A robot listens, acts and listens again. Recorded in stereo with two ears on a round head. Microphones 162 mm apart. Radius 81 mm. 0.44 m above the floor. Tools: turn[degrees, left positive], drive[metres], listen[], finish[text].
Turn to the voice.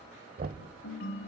Action: listen[]
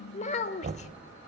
Thought: The child speaking: about 40° left or 140° left.
Action: turn[40]
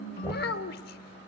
Thought: So it is at 90° left.
Action: turn[90]
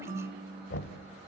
Action: listen[]
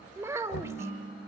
Thought: The child speaking is now 20° right.
Action: turn[-20]
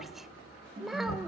Action: finish[Found it: a child speaking, straight ahead, under 1 m away.]